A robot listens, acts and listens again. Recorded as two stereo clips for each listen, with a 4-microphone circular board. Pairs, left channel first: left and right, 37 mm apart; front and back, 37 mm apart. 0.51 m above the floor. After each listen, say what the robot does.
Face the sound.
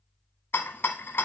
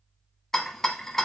Turn 80° left.
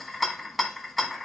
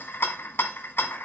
Found it: a rattle, straight ahead, 1 to 2 m away.